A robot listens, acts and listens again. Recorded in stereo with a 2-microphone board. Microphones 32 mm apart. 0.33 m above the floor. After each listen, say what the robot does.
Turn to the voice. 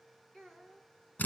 Turn 30° left.
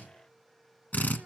Keep listening.
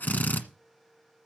Keep listening.
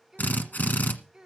Turn 20° right.
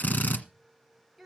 Facing the child speaking.